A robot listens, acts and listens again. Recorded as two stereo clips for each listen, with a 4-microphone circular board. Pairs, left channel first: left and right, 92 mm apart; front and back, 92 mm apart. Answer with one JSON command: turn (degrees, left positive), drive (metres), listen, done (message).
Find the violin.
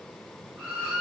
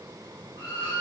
{"turn": -15}
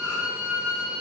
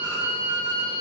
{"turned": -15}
{"done": "Facing the violin."}